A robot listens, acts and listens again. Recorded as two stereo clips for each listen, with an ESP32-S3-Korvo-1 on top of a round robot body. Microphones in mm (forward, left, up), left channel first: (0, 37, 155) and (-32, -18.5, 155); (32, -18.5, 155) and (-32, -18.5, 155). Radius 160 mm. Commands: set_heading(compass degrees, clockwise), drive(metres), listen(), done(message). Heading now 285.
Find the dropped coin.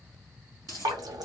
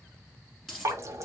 set_heading(15)
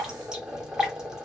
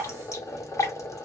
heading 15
done("Facing where the dropped coin came from. I can't hear it now.")